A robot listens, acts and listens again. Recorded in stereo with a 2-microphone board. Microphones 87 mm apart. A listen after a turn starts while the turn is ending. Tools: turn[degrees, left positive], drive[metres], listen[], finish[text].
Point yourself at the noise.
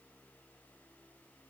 Action: listen[]
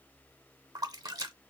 Thought: The splash: about 45° right or 135° right.
Action: turn[-45]
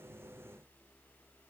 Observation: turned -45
Action: listen[]
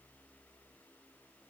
Action: finish[I heard a splash, but can't make it out now. It was about straight ahead or 90° right.]